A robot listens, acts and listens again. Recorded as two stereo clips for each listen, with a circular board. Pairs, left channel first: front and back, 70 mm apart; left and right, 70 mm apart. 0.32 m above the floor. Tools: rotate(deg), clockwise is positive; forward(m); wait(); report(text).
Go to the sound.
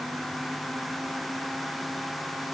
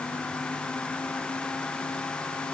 wait()
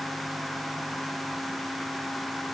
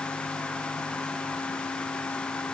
wait()
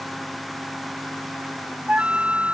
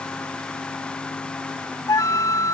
rotate(-110)
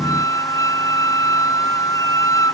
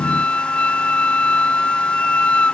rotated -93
rotate(-20)
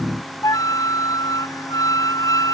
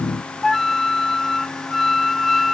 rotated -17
forward(1.0)
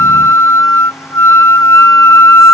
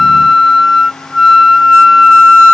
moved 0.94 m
forward(1.0)
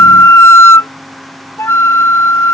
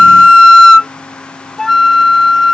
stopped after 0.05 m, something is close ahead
report("I am next to the flute.")